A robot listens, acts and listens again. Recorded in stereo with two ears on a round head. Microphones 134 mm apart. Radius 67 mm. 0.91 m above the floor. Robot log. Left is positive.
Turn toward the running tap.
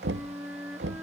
cmd idle
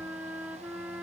cmd idle
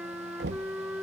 end: I can't make out a running tap to turn to.